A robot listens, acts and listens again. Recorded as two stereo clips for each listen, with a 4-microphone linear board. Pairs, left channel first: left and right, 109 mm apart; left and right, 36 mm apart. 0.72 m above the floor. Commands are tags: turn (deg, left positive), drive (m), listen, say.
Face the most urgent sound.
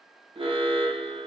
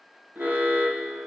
<turn deg="-55"/>
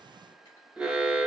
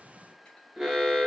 <say>Found it: an alarm, straight ahead.</say>